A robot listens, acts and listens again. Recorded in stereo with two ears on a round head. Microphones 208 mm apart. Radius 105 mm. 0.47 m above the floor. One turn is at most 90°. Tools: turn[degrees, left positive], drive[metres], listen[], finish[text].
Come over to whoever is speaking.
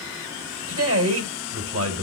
Thought: The man speaking: about 65° right or 115° right.
Action: turn[-65]
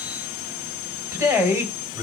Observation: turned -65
Thought: So it is at 15° right.
Action: turn[-15]
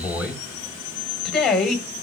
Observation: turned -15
Action: drive[1.0]
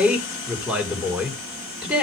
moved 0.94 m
Action: drive[1.0]
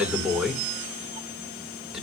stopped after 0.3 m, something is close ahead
Action: finish[Arrived at the man speaking, straight ahead.]